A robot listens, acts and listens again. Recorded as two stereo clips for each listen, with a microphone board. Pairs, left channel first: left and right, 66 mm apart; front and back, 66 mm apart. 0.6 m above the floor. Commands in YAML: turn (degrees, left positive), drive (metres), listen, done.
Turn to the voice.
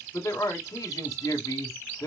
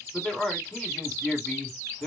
turn: 80
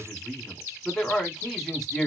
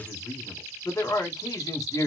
done: "Facing the man speaking."